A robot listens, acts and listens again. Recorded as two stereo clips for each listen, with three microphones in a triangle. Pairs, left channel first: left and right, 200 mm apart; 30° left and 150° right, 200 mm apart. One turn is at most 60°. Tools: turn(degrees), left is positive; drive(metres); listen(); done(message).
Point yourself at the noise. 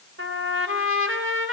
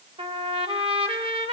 turn(degrees=-60)
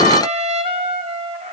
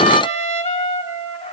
turn(degrees=-30)
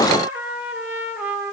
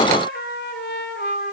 done("Facing the trumpet.")